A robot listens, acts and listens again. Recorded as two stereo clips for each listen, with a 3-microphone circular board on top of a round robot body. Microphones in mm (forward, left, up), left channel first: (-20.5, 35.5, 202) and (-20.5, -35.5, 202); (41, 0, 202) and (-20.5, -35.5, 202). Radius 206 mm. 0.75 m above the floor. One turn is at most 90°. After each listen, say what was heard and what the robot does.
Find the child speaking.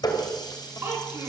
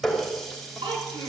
The child speaking: 150° right. Turn 90° right.
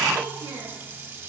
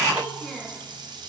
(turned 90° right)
The child speaking is now 55° right. Turn 55° right.
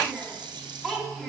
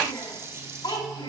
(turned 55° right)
Facing the child speaking, over 4 m away.